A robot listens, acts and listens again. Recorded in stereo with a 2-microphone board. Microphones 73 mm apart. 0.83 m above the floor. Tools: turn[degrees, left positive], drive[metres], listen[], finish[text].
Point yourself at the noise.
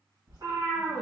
Thought: The cat meowing: about 65° right or 115° right.
Action: turn[-65]
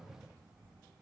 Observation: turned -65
Action: listen[]
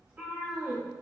Thought: So it is at 30° right.
Action: turn[-30]
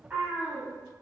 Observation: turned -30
Thought: The cat meowing is now 30° right.
Action: turn[-30]
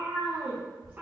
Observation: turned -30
Thought: The cat meowing is now 25° right.
Action: turn[-25]
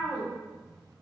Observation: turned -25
Thought: The cat meowing is now 10° right.
Action: turn[-10]
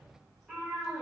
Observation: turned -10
Action: finish[Facing the cat meowing, 2 to 4 m away.]